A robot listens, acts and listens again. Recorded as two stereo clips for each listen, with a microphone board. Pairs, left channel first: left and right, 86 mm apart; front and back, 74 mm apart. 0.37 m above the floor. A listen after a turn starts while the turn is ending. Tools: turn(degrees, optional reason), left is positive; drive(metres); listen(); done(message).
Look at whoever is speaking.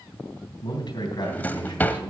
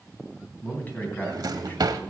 turn(degrees=65, reason="The man speaking: 65° left.")
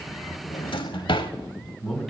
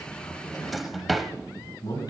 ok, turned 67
done("Found it: a man speaking, straight ahead, 2 to 4 m away.")